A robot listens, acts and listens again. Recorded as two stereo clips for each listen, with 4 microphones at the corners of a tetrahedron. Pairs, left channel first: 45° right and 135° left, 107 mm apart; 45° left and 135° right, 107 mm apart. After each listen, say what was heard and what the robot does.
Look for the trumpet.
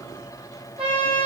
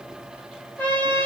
The trumpet: 115° left. Turn 115° left.
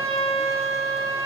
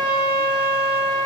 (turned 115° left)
The trumpet is now 20° right. Turn 20° right.
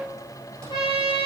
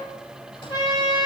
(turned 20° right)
Facing the trumpet, 2 to 4 m away.